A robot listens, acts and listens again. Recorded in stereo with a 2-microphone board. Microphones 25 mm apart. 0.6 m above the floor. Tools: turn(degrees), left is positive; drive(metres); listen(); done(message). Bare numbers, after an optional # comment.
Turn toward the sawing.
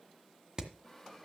turn(30)
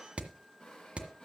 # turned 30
# So it is at 145° left.
turn(145)
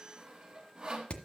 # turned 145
# The sawing is now 35° right.
turn(-35)
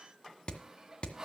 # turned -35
# The sawing is now 20° right.
turn(-20)
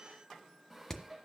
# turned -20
done("Facing the sawing.")